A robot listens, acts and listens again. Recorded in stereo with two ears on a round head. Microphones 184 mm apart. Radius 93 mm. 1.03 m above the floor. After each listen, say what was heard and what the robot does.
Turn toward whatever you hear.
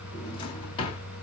The drawer: about 25° left or 155° left. Turn 25° left.
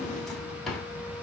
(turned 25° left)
Found it: a drawer, straight ahead.